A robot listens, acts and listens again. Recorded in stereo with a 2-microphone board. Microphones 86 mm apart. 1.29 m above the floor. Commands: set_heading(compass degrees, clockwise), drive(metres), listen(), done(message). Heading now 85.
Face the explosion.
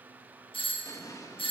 set_heading(50)
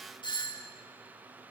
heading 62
listen()
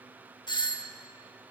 done("I heard an explosion, but can't make it out now. It was about 15° left or 120° left.")